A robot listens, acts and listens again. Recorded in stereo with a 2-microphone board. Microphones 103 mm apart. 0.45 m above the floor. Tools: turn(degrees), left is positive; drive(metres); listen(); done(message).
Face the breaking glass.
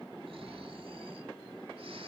listen()
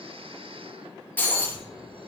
turn(degrees=20)
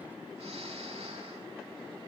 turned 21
listen()
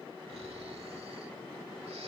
done("I heard breaking glass, but can't make it out now. It was about 5° right or 140° left.")